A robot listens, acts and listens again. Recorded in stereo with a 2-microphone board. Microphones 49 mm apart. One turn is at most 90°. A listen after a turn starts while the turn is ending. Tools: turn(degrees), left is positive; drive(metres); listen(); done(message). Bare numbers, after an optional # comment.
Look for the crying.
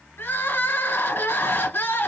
# The crying: about 45° left or 135° left.
turn(45)
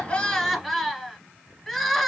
done("Found it: crying, straight ahead.")